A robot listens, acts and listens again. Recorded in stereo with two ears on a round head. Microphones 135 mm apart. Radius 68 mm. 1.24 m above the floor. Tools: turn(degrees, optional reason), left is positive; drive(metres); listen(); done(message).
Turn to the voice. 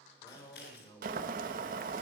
turn(degrees=25, reason="The man speaking: about 25° left or 155° left.")
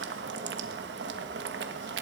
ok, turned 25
listen()
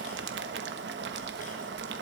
listen()
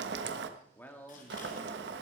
turn(degrees=30)
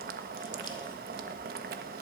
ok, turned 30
listen()
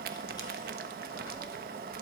listen()
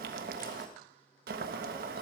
done("I heard a man speaking, but can't make it out now. It was about 15° right or 135° left.")